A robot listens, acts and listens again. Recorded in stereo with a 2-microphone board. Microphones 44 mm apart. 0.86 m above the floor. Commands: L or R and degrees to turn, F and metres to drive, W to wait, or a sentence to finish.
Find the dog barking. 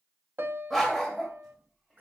L30
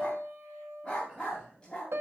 L165
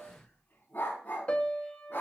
L50
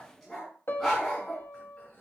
L10
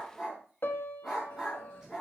Facing the dog barking.